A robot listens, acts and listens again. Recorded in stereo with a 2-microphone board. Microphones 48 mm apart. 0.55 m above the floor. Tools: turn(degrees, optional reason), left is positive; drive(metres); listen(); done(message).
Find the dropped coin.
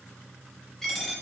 turn(degrees=30)
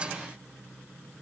listen()
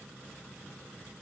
done("I heard a dropped coin, but can't make it out now. It was about 20° right or 140° left.")